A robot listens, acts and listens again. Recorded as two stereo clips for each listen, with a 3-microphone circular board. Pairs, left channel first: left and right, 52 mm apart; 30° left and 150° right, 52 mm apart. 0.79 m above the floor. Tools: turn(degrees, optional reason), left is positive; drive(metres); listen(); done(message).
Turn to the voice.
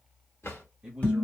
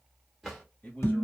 turn(degrees=-25, reason="The man speaking: 25° right.")
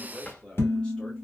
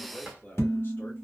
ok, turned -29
turn(degrees=25, reason="The man speaking is now 25° left.")
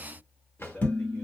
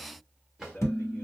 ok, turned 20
turn(degrees=45, reason="The man speaking is now 45° left.")
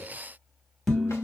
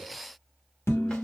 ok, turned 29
turn(degrees=20, reason="Nothing new. It was at 20° left.")
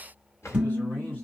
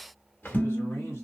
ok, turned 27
turn(degrees=-10, reason="Nothing new. It was at 10° right.")
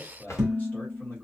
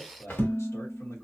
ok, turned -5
turn(degrees=40, reason="The man speaking is now 40° left.")
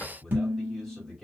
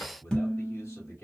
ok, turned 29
turn(degrees=10, reason="The man speaking is now 10° left.")
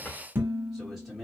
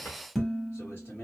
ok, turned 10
done("Facing the man speaking, 1 to 2 m away.")